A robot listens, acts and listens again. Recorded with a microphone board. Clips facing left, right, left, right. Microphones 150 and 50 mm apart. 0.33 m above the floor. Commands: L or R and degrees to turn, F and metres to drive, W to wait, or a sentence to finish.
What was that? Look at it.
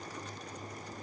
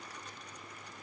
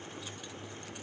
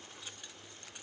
W
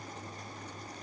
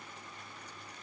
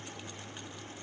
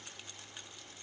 W
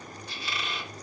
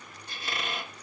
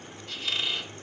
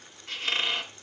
R50
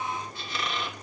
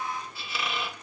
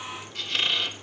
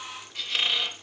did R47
Facing the squeak, 2 to 4 m away.